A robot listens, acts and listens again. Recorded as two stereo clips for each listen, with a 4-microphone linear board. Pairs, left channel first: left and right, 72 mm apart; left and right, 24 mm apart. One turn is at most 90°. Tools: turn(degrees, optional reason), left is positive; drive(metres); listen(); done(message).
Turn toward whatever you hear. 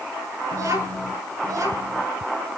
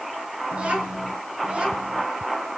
turn(degrees=-55, reason="The child speaking: about 55° right or 125° right.")
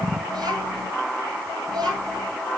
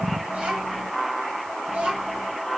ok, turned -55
turn(degrees=-65, reason="So it is at 65° right.")
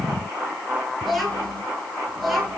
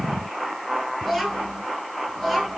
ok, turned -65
done("Found it: a child speaking, straight ahead, over 4 m away.")